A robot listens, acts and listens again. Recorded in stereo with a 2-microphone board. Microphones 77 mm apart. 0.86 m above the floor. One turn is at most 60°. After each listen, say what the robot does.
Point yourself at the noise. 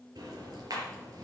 Turn 60° right.
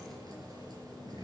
Turn 60° right.
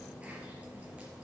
Turn 15° right.
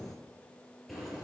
Found it: ticking, straight ahead, over 4 m away.